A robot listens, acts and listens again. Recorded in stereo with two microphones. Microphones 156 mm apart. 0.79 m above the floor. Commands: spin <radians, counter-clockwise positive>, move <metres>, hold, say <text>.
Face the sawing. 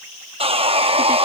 spin -0.70
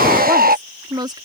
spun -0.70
spin -1.75
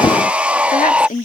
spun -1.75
spin -0.17
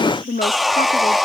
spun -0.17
say Found it: sawing, straight ahead.